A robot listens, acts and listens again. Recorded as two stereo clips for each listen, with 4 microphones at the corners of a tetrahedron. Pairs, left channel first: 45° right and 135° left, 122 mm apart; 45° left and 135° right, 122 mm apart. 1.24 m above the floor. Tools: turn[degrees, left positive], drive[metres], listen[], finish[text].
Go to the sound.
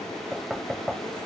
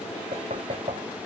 Thought: The knocking: 135° right.
Action: turn[-135]
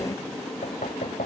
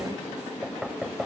Thought: The knocking is now 50° right.
Action: turn[-50]
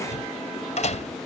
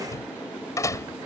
Thought: The knocking is now 20° right.
Action: turn[-20]
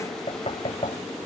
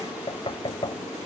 Action: drive[1.0]
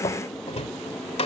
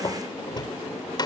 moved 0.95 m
Thought: The knocking is now 10° right.
Action: turn[-10]
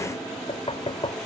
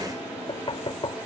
Action: drive[1.0]
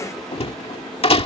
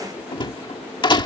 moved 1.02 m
Action: drive[1.0]
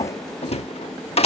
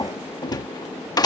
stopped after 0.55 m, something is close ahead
Thought: The knocking is now 10° right.
Action: turn[-10]
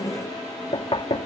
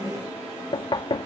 Action: finish[I am next to the knocking.]